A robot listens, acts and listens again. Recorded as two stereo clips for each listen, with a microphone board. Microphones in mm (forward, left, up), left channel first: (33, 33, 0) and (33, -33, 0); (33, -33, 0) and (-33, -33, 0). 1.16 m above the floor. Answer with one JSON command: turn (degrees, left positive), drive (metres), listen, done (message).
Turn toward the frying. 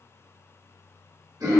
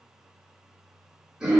{"listen": true}
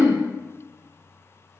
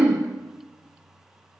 {"listen": true}
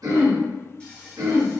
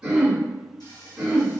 {"turn": 15}
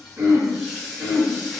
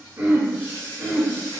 {"done": "Found it: frying, straight ahead."}